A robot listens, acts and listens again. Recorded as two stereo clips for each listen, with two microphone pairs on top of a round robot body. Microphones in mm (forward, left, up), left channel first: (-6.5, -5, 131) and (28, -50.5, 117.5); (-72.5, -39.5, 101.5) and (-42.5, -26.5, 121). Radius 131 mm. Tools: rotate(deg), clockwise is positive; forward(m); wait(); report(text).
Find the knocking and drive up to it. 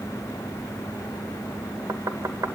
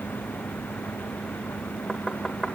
rotate(70)
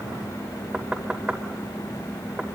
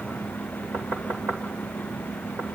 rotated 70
rotate(-20)
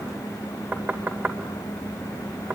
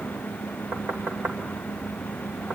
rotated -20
forward(1.0)
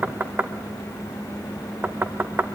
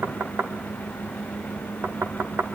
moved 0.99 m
forward(1.0)
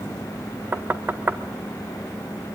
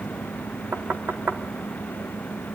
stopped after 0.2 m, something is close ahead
report("I am next to the knocking.")